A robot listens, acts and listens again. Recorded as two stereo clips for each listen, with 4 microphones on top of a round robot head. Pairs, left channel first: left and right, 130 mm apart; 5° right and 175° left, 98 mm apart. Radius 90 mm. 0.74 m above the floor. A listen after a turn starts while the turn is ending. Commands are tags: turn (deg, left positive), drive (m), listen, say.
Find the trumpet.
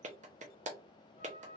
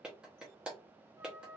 <turn deg="115"/>
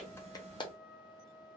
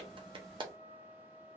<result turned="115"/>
<say>Found it: a trumpet, straight ahead, 1 to 2 m away.</say>